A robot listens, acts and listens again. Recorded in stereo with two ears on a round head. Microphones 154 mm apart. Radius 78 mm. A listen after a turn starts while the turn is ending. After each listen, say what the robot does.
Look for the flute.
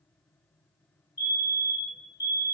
Keep listening.
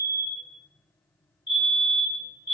Keep listening.
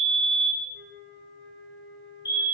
Turn 65° right.
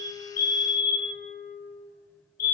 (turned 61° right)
Turn 55° right.
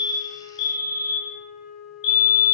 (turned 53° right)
Facing the flute, 1 to 2 m away.